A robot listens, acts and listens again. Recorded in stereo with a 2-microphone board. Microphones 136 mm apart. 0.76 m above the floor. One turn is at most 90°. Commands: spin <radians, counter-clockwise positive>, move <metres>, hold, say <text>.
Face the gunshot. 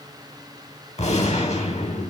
spin 1.13
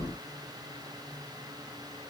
hold
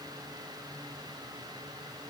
say I heard a gunshot, but can't make it out now. It was about straight ahead or 50° left.